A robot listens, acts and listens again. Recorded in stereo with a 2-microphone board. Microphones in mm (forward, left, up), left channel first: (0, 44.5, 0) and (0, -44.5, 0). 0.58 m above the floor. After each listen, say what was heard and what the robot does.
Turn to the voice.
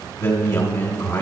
The man speaking: about 35° left or 145° left. Turn 35° left.
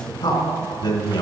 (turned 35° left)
So it is at 110° left. Turn 110° left.
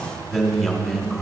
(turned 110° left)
Found it: a man speaking, straight ahead, 2 to 4 m away.